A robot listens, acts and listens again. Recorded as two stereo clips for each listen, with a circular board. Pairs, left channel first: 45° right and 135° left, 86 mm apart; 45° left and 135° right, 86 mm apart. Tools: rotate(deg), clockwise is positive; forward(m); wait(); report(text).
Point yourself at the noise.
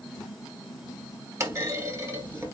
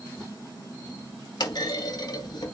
rotate(-80)
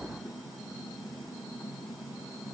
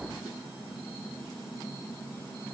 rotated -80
report("I heard a clunk from this way, but can't make it out now.")